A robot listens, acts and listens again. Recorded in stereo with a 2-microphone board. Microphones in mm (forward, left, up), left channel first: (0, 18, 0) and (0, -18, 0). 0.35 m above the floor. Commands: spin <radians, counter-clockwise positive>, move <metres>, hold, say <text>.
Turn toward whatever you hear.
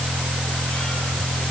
hold
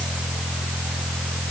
hold
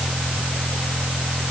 say I can't make out anything to turn to.